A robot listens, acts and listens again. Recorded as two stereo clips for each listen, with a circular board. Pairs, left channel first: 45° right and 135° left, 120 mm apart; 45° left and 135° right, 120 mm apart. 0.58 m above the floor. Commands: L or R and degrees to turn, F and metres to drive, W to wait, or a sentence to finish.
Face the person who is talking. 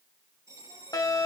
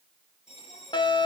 W
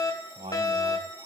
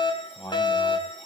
L100
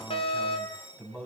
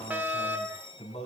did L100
L30
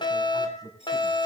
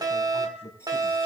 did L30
L10
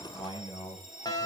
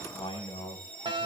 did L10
Found it: a man speaking, straight ahead.